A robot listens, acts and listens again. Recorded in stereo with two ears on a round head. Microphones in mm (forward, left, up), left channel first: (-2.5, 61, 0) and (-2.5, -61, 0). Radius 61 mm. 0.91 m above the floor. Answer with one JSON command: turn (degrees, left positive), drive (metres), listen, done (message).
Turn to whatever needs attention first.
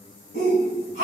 {"turn": -55}
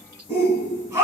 {"turn": -25}
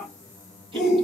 {"done": "Facing the shout, 1 to 2 m away."}